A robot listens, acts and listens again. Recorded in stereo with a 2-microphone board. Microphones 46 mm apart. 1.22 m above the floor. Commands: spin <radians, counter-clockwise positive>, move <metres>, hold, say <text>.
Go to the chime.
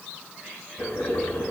hold
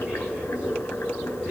hold
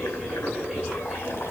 say I can't make out a chime, only boiling.